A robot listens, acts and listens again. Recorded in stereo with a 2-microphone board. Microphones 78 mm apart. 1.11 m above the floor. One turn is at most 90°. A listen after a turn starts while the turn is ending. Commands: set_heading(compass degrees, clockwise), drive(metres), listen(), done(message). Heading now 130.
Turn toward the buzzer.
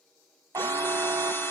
set_heading(175)
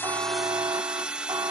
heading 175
set_heading(250)
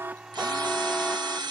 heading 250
set_heading(240)
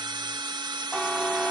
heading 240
done("Facing the buzzer.")